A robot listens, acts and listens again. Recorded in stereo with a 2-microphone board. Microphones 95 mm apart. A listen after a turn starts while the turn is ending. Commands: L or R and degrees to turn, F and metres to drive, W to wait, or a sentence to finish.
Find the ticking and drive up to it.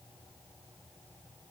W
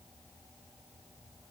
W
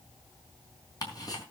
L40
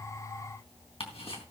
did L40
L95
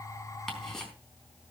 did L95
F1.0
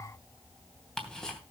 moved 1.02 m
F1.0
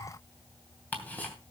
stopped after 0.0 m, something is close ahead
L15
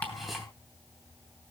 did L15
W
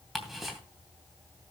Blocked. The ticking is further on, straight ahead.